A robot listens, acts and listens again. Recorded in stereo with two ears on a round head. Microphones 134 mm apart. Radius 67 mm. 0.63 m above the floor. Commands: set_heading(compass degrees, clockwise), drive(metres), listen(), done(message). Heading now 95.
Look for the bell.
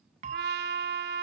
set_heading(145)
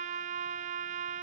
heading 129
listen()
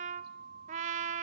set_heading(224)
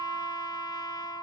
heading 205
set_heading(225)
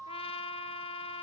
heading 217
done("Facing the bell.")